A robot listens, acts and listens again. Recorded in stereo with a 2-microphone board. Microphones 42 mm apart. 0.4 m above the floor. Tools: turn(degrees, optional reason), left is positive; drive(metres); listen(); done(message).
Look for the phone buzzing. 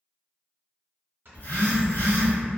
turn(degrees=50, reason="The phone buzzing: about 50° left or 130° left.")
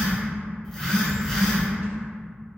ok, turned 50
done("Facing the phone buzzing, under 1 m away.")